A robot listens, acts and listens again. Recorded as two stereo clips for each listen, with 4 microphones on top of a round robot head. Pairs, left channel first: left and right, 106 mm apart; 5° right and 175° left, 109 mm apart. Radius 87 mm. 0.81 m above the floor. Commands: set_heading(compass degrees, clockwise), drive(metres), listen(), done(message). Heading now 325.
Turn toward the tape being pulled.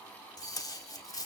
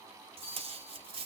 set_heading(180)
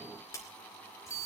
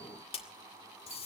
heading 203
set_heading(178)
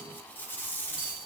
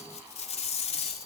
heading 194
set_heading(179)
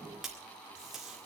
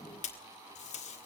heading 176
done("Facing the tape being pulled.")